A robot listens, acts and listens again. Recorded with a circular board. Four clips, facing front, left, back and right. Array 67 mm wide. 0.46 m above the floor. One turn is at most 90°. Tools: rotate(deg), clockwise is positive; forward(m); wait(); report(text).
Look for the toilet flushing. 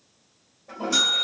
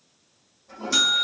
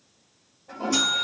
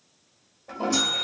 rotate(75)
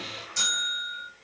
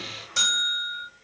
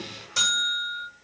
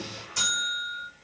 rotate(10)
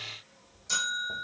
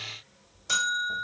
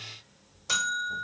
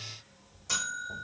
wait()
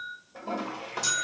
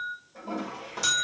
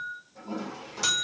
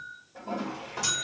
report("Found it: a toilet flushing, straight ahead.")